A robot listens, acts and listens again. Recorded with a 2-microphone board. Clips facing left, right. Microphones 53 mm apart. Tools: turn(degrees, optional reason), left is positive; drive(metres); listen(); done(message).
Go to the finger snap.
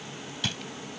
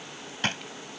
listen()
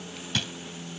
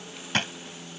listen()
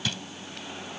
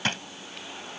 done("I can't make out a finger snap, only a drawer.")